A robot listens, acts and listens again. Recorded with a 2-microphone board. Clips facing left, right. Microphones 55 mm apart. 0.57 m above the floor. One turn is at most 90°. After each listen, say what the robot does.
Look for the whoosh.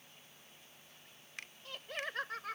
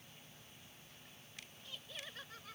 Keep listening.
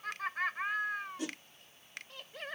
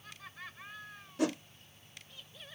Turn 75° right.
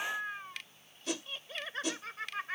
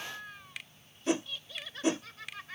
Turn 30° right.
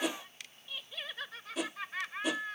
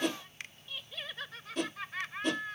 Found it: a whoosh, straight ahead.